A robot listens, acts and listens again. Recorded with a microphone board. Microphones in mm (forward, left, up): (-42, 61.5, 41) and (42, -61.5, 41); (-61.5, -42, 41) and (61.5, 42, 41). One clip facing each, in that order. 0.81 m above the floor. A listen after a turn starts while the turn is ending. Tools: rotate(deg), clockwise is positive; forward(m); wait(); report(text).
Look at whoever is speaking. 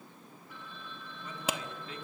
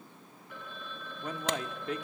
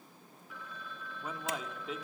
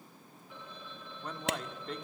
rotate(60)
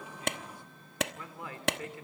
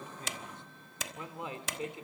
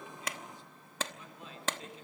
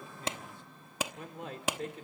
rotate(-15)
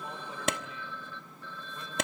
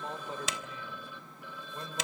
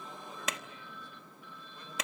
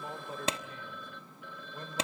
wait()
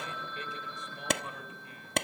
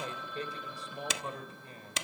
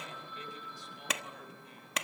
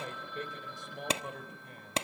report("Facing the man speaking, over 4 m away.")